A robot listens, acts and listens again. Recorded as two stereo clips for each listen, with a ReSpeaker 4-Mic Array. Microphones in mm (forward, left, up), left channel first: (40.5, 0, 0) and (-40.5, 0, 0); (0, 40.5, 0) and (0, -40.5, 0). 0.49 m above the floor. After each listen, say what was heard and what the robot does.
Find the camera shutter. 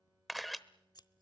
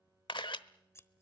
The camera shutter: 90° left. Turn 90° left.
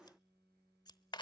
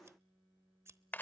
The camera shutter is now 20° left. Turn 20° left.
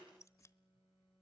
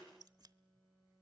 Keep listening.
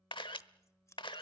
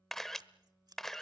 Facing the camera shutter, under 1 m away.